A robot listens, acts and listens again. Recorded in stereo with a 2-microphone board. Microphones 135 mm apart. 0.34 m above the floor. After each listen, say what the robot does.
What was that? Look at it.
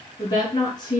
Turn 35° left.
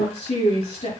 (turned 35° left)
Turn 110° left.
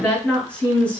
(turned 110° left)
Turn 10° left.
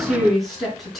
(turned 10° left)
Found it: a woman speaking, straight ahead.